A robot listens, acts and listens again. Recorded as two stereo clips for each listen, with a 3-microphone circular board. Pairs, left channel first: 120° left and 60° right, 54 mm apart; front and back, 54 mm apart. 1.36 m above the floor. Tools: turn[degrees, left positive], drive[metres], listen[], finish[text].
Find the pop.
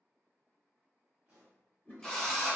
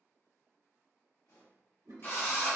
Thought: The pop: 10° left.
Action: turn[10]
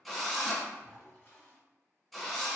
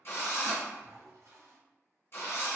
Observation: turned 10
Action: finish[Facing where the pop came from. I can't hear it now.]